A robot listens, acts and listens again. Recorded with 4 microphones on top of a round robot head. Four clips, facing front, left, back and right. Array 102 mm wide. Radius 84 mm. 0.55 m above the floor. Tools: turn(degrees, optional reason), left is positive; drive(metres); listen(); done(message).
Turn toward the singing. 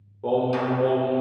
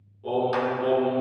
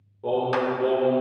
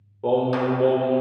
turn(degrees=-80, reason="The singing: 80° right.")
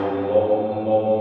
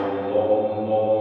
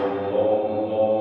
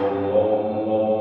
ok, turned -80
turn(degrees=-25, reason="The singing is now 25° right.")
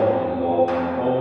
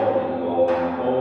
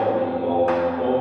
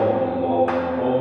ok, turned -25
turn(degrees=-30, reason="The singing is now 30° right.")
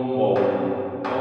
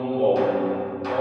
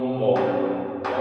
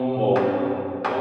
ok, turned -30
done("Found it: singing, straight ahead, over 4 m away.")